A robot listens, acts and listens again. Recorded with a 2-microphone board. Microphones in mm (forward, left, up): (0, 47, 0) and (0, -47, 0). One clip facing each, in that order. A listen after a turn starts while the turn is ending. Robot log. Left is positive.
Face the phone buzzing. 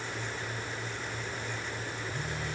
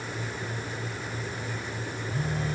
note: The phone buzzing: about 35° right or 145° right.
cmd yaw -35
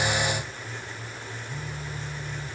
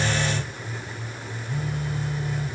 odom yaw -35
note: So it is at 110° right.
cmd yaw -110
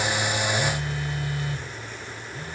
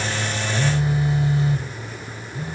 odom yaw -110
note: The phone buzzing is now 25° right.
cmd yaw -25
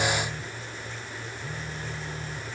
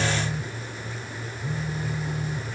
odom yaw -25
note: The phone buzzing is now 10° right.
cmd yaw -10
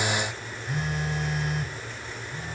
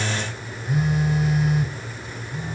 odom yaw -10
end: Facing the phone buzzing.